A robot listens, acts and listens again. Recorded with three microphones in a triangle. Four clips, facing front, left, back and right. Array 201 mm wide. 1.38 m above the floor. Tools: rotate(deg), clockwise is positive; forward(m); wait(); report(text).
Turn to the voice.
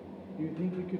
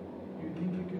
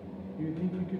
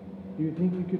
rotate(75)
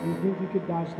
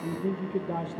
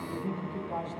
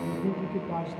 rotate(-20)
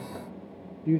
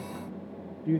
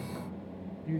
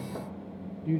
rotate(-20)
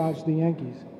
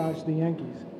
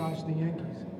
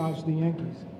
rotate(-20)
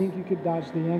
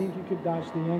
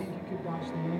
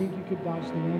rotate(-20)
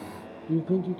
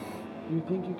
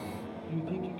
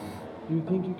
report("Facing the man speaking.")